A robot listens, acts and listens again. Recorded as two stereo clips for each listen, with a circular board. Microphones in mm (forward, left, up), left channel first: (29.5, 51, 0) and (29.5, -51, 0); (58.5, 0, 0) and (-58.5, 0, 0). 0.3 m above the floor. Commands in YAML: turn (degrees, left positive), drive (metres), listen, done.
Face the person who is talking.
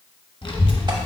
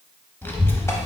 turn: 70
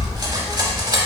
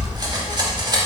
done: "Facing the child speaking."